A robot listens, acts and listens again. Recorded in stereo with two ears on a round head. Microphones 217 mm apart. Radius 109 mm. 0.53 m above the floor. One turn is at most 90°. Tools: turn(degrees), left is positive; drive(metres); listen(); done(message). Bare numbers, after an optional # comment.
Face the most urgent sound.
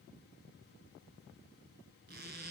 listen()
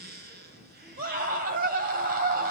# The scream: about 40° right or 140° right.
turn(-40)
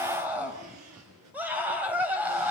# So it is at 10° right.
turn(-10)
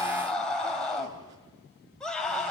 done("Facing the scream, 2 to 4 m away.")